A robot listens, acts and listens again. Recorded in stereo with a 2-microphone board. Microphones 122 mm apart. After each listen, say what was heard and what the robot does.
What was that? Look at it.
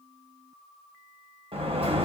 The sliding door: about 50° right or 130° right. Turn 50° right.
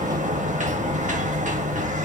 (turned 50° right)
So it is at 80° right. Turn 80° right.
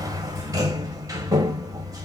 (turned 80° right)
The sliding door is now 30° right. Turn 30° right.
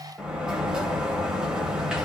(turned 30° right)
Found it: a sliding door, straight ahead, 1 to 2 m away.